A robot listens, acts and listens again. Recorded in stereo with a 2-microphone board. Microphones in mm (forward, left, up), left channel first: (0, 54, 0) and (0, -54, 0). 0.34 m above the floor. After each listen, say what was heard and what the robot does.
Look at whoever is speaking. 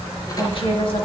The woman speaking: about 55° left or 125° left. Turn 55° left.
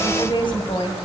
So it is at 55° left. Turn 55° left.
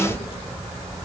The woman speaking is now 15° right. Turn 15° right.
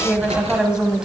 The woman speaking is now 10° right. Turn 10° right.
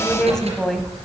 Found it: a woman speaking, straight ahead, 1 to 2 m away.